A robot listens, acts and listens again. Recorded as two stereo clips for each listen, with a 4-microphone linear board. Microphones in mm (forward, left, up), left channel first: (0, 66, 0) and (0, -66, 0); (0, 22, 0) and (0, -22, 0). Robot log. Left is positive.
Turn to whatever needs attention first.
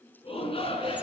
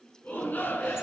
note: The shout: about 45° left or 135° left.
cmd yaw +45
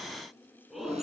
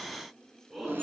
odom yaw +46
end: Found it: a shout, straight ahead, over 4 m away.